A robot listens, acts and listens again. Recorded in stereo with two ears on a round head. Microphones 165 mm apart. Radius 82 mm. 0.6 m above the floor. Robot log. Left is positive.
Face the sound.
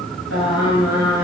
cmd yaw -90
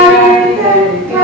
note: So it is at 10° right.
cmd yaw -10
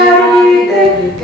end: Facing the singing, over 4 m away.